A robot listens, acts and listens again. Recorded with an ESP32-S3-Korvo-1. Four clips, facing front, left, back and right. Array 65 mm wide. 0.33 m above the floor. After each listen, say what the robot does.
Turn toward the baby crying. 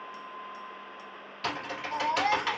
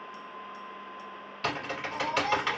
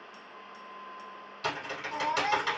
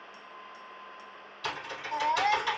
Turn 55° right.
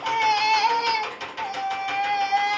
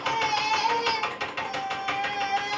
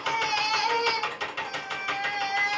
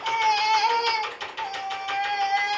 Turn 20° right.
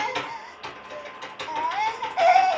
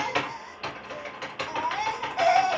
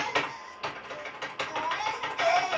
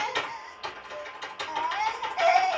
Facing the baby crying, 1 to 2 m away.